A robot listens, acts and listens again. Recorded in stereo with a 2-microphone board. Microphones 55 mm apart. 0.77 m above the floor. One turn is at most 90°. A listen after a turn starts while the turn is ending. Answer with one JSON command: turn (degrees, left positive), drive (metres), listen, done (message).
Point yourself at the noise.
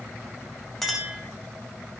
{"turn": 30}
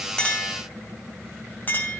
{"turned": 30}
{"turn": 90}
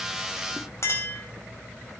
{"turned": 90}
{"turn": 60}
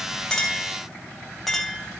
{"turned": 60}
{"done": "Facing the clink."}